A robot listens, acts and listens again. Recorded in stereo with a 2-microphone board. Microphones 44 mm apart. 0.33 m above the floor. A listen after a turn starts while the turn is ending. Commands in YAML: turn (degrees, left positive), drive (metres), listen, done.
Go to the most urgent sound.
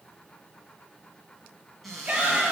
turn: -20
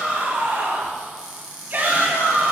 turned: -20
turn: -135
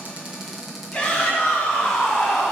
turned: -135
turn: 20
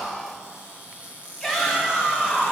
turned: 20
drive: 1.0
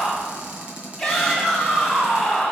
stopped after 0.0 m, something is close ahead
done: "Something is in my way. I am facing the shout but have not reached it."